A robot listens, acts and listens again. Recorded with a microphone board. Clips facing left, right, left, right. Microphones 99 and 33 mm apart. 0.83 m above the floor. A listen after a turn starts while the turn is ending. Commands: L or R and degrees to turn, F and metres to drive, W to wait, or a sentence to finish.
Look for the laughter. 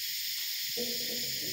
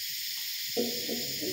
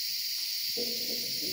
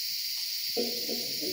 R70
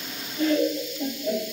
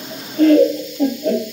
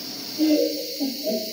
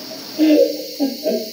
R70
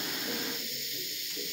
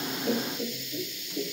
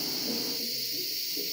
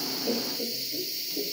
R75
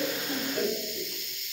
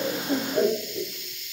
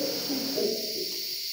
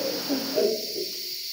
R20
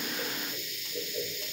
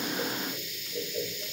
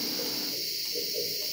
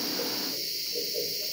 Found it: laughter, straight ahead.